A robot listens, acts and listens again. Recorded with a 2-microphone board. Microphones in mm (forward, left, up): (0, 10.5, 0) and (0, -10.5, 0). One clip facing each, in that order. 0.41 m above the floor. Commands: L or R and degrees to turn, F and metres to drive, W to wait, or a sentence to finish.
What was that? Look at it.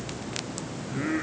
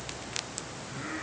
L25
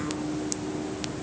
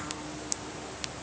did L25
W
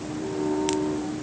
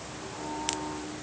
L40
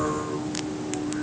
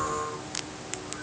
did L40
L110
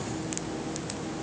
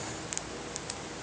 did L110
W
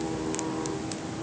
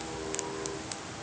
W
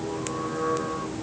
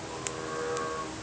L20
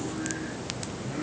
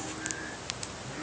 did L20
W
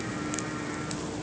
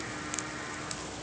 W
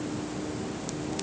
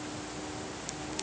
Facing where the singing came from. I can't hear it now.